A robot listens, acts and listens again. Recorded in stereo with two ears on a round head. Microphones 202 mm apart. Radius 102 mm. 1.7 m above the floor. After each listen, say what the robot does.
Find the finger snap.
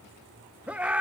Keep listening.
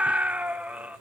Keep listening.
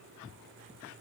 I can't make out a finger snap, only a scream.